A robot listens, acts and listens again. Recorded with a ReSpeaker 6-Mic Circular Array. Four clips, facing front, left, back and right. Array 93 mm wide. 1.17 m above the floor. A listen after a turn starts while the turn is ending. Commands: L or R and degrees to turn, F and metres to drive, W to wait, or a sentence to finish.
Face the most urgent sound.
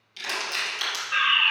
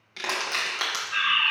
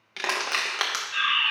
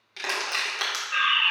R10
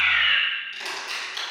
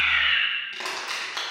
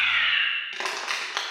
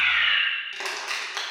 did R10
Facing the fire alarm, 1 to 2 m away.